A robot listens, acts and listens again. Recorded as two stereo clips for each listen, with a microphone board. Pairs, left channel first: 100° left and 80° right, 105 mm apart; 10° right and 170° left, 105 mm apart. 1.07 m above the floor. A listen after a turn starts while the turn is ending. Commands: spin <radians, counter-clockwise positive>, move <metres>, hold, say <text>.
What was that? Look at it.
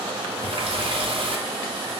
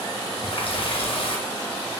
spin -0.70
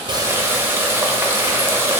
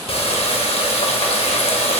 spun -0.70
spin -0.17
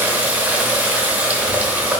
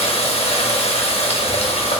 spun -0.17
say Found it: a running tap, straight ahead, under 1 m away.